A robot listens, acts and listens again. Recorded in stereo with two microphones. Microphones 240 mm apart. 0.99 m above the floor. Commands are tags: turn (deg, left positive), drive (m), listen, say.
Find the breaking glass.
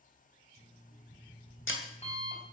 <turn deg="55"/>
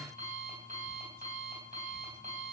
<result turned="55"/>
<listen/>
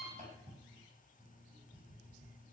<say>I heard breaking glass, but can't make it out now. It was about straight ahead or 70° left.</say>